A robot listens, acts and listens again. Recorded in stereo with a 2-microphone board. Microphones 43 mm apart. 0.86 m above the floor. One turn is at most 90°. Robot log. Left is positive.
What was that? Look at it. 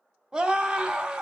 note: The scream: about 20° right or 160° right.
cmd yaw -20
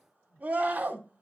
note: So it is at 140° right.
cmd yaw -90
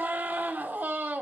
note: The scream is now 50° right.
cmd yaw -50
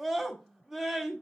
end: Found it: a scream, straight ahead, 2 to 4 m away.